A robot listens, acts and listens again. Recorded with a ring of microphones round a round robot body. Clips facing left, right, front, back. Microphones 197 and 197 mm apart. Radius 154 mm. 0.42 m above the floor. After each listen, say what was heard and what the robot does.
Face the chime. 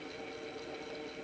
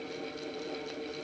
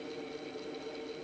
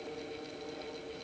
Keep listening.
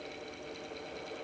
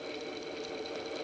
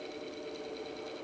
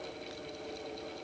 Keep listening.
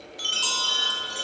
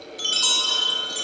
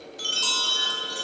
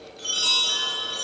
The chime: 50° right. Turn 50° right.
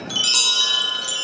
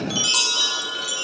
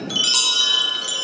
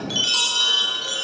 The chime is now 30° left. Turn 30° left.
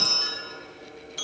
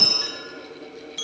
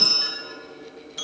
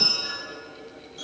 Facing the chime.